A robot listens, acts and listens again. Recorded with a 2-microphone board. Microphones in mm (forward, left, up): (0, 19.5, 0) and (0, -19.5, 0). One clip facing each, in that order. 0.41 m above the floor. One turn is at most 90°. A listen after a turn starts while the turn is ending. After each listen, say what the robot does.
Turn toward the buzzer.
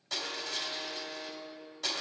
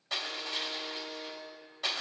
Turn 75° left.
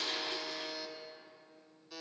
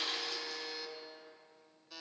Facing the buzzer.